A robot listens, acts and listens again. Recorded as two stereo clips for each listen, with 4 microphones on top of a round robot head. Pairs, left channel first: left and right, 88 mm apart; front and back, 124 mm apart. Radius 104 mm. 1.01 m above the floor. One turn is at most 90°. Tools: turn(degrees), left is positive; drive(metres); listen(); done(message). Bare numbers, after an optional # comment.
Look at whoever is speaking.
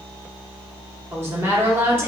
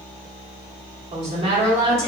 # The woman speaking: 150° right.
turn(-90)
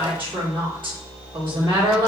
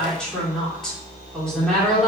# The woman speaking is now 85° right.
turn(-85)
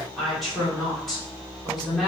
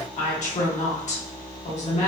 done("Found it: a woman speaking, straight ahead.")